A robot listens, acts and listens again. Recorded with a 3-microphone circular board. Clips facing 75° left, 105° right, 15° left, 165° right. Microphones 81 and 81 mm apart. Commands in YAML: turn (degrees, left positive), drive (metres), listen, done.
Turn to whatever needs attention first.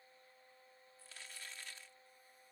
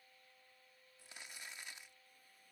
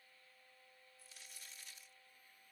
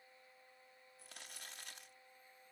listen: true
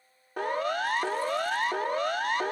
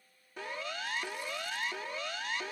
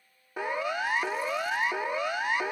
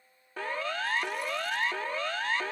turn: 90
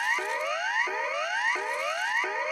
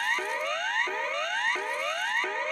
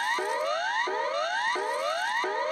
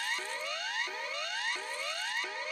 done: "Found it: a siren, straight ahead."